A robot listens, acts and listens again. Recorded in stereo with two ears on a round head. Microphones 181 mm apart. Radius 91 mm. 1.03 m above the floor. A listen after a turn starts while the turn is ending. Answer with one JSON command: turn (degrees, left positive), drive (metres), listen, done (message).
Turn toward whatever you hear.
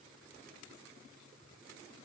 {"listen": true}
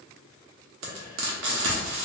{"turn": -90}
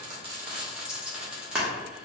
{"done": "Facing the frying."}